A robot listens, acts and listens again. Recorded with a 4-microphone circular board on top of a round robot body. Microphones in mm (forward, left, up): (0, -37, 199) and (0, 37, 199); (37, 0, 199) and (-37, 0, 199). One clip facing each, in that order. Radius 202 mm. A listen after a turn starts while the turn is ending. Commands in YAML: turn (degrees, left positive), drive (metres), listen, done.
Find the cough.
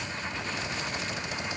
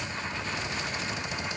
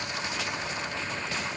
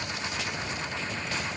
listen: true
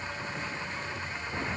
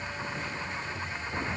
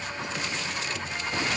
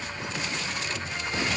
listen: true
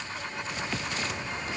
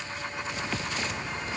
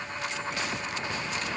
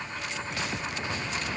done: "I can't make out a cough to turn to."